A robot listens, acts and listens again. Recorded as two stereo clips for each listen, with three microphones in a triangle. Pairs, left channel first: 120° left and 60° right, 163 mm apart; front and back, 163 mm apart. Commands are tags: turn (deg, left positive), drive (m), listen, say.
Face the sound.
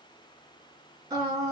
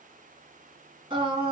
<turn deg="-125"/>
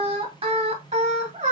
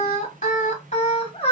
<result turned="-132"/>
<turn deg="-40"/>
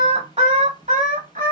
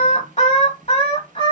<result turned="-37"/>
<turn deg="-50"/>
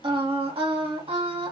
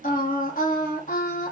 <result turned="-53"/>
<turn deg="-15"/>
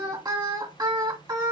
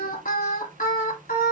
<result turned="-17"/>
<say>Facing the singing, 1 to 2 m away.</say>